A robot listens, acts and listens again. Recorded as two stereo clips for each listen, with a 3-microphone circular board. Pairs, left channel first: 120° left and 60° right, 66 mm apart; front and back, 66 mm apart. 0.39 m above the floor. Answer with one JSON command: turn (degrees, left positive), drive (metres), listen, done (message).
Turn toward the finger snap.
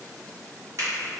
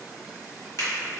{"turn": -20}
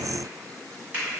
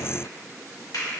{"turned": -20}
{"done": "Found it: a finger snap, straight ahead."}